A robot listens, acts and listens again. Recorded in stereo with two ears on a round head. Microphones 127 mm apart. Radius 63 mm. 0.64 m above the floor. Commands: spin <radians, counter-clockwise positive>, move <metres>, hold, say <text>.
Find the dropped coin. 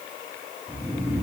hold
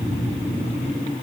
hold
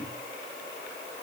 say I can't make out a dropped coin to turn to.